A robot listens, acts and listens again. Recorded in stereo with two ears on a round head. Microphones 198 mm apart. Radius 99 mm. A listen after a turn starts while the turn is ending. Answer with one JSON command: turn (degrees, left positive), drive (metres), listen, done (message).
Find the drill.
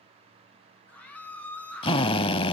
{"turn": 25}
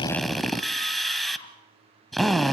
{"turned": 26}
{"done": "Facing the drill."}